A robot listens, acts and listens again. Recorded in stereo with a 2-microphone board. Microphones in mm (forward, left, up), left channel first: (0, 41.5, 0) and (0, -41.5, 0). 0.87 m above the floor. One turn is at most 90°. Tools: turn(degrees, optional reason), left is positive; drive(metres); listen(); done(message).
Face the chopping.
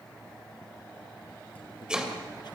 turn(degrees=-30)
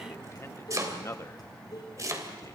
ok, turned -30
turn(degrees=-90, reason="So it is at 140° right.")
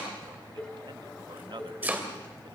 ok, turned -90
turn(degrees=-20, reason="The chopping is now 20° right.")
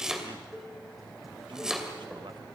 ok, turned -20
done("Found it: chopping, straight ahead.")